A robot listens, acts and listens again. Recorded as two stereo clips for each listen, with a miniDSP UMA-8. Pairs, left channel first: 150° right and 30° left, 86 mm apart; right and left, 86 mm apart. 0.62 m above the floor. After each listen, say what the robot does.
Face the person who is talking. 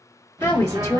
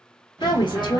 Turn 105° right.
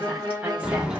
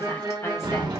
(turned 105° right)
Keep listening.
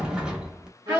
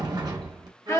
Turn 40° right.
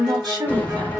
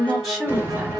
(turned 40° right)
Found it: a woman speaking, straight ahead.